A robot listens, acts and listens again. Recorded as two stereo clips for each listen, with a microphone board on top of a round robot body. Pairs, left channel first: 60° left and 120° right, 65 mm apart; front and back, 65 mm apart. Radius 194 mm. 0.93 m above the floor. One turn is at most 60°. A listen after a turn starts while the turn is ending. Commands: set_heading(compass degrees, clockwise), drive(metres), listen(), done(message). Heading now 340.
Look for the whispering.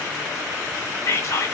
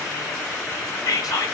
set_heading(320)
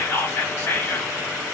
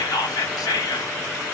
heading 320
done("Facing the whispering.")